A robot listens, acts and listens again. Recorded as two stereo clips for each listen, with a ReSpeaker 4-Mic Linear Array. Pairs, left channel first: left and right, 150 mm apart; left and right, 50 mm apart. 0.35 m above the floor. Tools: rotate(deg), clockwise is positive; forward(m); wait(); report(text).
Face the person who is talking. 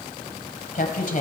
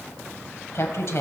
rotate(-60)
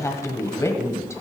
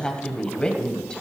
rotate(-20)
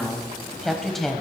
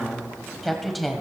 report("Found it: a woman speaking, straight ahead, 1 to 2 m away.")